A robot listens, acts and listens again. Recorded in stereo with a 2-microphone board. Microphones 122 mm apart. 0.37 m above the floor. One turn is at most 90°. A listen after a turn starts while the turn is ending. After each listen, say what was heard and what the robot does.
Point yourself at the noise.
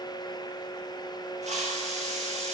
The hiss: about 70° right or 110° right. Turn 70° right.
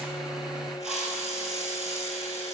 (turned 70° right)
Facing the hiss.